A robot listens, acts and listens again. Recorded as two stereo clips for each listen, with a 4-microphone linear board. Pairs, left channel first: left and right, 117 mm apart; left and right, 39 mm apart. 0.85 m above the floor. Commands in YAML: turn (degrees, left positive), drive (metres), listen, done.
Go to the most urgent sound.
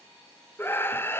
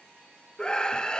turn: 20
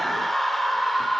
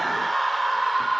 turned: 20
drive: 1.0
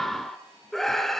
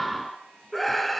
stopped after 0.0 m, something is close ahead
done: "Something is in my way. I am facing the scream but have not reached it."